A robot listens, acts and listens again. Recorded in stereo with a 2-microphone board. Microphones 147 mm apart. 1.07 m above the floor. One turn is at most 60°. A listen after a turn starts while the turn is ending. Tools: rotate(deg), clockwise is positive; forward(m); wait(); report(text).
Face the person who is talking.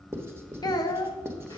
rotate(-25)
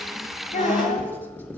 rotate(-60)
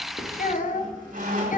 rotate(-60)
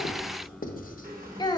rotate(-30)
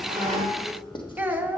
rotate(10)
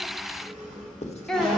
report("Facing the child speaking.")